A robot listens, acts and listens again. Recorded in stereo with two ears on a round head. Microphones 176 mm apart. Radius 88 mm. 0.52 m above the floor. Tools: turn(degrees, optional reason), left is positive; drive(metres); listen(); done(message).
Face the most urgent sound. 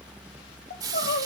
turn(degrees=45, reason="The crying: about 45° left or 135° left.")
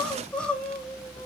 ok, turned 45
done("Found it: crying, straight ahead.")